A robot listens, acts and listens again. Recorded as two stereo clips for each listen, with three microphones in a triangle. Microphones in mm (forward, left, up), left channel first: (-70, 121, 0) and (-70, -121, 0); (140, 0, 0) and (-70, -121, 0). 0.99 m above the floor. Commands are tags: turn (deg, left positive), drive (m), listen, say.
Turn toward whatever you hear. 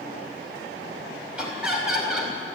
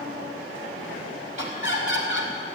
<say>Facing the laughter.</say>